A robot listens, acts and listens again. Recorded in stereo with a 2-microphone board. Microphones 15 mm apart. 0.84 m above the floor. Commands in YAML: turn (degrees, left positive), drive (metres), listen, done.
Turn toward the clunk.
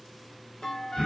turn: 60
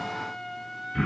listen: true
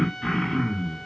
done: "I heard a clunk, but can't make it out now. It was about straight ahead or 60° left."